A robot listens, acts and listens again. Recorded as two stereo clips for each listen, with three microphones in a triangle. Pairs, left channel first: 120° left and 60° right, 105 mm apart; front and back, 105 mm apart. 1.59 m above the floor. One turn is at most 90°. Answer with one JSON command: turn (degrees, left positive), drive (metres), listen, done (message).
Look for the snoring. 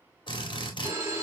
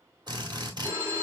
{"listen": true}
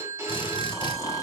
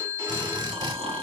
{"turn": 90}
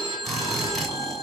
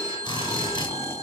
{"turn": 65}
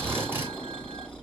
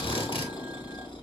{"turn": 40}
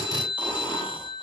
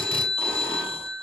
{"listen": true}
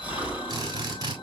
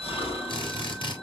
{"turn": 15}
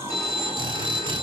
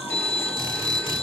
{"done": "Facing the snoring, 1 to 2 m away."}